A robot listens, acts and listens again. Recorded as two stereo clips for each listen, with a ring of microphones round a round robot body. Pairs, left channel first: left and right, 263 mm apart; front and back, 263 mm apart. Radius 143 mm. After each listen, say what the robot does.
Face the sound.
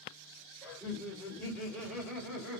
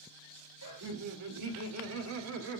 Turn 180° left.
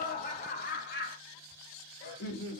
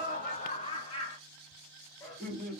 Turn 85° left.
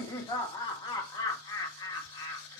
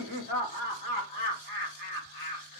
Turn 25° left.
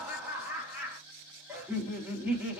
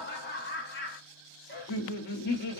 Turn 10° right.
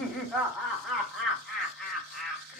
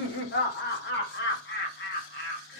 Facing the laughter, 1 to 2 m away.